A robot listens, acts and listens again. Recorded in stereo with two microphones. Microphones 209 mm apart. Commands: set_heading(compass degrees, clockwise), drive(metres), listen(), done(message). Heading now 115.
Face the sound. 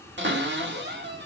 set_heading(175)
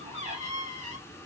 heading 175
set_heading(215)
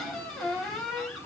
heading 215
done("Found it: a cupboard door, straight ahead.")